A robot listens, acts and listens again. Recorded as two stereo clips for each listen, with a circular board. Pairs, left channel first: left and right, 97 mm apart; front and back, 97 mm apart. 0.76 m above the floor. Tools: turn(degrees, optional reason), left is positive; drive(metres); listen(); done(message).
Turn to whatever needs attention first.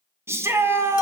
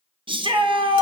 turn(degrees=-150, reason="The shout: 150° right.")
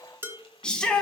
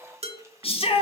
turn(degrees=10, reason="The shout is now 10° left.")
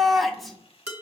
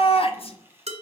done("Found it: a shout, straight ahead.")